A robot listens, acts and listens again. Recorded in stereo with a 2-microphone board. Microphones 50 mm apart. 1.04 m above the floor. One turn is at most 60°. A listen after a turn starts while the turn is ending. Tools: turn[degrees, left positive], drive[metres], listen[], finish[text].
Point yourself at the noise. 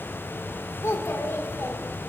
Thought: The child speaking: about 70° left or 110° left.
Action: turn[60]
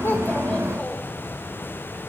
Action: listen[]
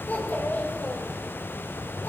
Thought: So it is at 40° left.
Action: turn[40]
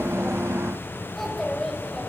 Action: finish[Facing the child speaking.]